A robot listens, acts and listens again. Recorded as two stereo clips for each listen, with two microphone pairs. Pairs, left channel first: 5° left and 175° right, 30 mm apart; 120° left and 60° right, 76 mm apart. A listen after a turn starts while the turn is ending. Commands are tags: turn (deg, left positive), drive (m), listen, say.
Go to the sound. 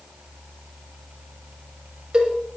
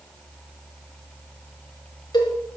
<turn deg="120"/>
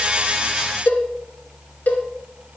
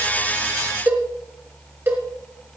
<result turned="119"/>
<drive m="1.0"/>
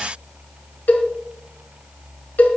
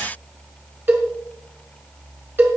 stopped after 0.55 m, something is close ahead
<say>Something is in my way. I am facing the cowbell but have not reached it.</say>